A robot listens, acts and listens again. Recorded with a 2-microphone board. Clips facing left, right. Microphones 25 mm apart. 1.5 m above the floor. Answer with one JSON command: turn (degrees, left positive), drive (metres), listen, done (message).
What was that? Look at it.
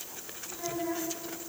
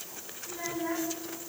{"turn": -90}
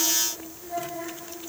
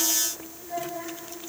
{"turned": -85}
{"turn": -10}
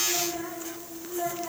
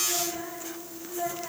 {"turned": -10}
{"turn": -10}
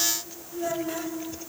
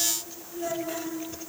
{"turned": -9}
{"done": "Facing the child speaking."}